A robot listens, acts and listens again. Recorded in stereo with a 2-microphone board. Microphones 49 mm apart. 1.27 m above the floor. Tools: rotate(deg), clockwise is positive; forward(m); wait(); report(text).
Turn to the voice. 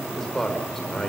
rotate(-30)
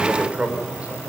rotate(25)
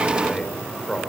report("Found it: a man speaking, straight ahead.")